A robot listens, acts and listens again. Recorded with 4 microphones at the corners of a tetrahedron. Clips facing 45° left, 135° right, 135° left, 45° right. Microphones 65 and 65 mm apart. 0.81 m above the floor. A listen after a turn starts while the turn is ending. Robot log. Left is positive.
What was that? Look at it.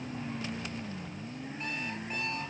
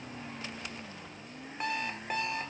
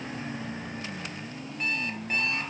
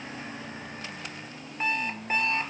note: The alarm clock: 110° right.
cmd yaw -110
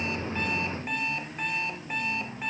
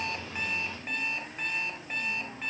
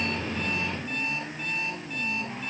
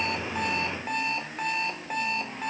note: The alarm clock is now 40° right.
cmd yaw -40
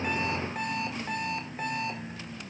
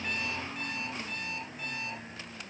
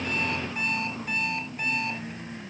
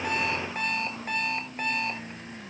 end: Facing the alarm clock.